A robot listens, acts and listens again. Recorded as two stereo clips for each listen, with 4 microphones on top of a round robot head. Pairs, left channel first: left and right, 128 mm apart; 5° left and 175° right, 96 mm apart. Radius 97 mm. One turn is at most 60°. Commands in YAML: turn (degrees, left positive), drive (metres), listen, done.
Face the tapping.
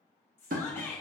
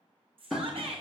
turn: -60
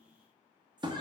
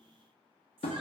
turn: -35
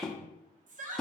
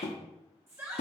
done: "Found it: tapping, straight ahead."